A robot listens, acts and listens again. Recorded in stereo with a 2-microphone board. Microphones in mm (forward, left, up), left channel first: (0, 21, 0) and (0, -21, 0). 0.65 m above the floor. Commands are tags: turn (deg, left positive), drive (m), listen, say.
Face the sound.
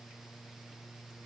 <listen/>
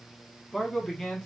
<turn deg="30"/>
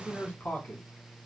<turn deg="130"/>
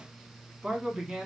<turn deg="-25"/>
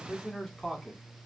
<say>Facing the man speaking, 1 to 2 m away.</say>